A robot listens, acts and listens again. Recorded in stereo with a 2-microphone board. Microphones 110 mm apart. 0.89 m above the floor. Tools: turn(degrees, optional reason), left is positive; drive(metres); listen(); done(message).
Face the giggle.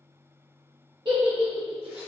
turn(degrees=-45, reason="The giggle: about 45° right or 135° right.")
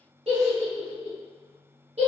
turn(degrees=-85, reason="So it is at 85° right.")
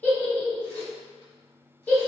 turn(degrees=15, reason="The giggle is now 15° left.")
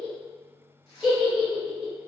done("Facing the giggle.")